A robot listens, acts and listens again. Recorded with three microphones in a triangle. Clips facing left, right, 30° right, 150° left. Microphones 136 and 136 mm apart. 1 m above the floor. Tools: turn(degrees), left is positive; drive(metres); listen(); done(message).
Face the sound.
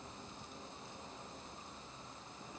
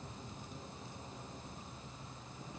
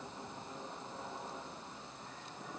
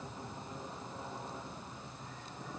listen()
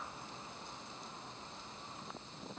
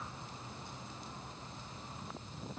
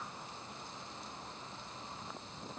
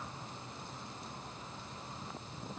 listen()
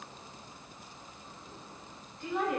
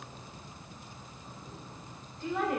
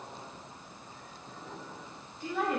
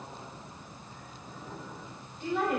turn(degrees=155)
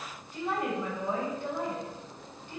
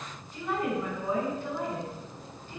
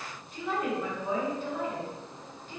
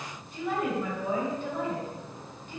turn(degrees=20)
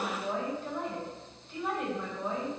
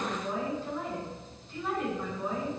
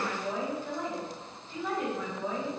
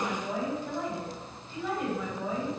turn(degrees=10)
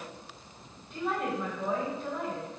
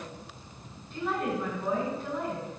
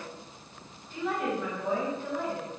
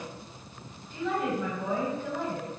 done("Facing the woman speaking.")